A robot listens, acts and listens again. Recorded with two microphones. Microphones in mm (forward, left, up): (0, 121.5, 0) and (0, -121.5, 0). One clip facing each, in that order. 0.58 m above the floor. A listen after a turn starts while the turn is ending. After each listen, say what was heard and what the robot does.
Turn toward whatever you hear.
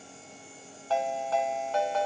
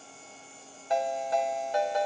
The ringtone: about 15° right or 165° right. Turn 15° right.
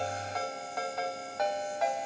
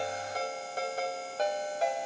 So it is at 145° right. Turn 145° right.
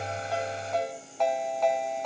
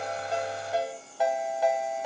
The ringtone is now 10° right. Turn 10° right.
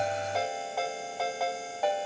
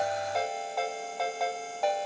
Found it: a ringtone, straight ahead, 2 to 4 m away.